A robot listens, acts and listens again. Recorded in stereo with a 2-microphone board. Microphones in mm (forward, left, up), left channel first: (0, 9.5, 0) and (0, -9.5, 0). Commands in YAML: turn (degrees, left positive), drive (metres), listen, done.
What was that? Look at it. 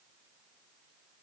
listen: true
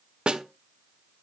turn: -55
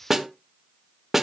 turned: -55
turn: -15
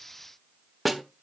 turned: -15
done: "Facing the snare drum."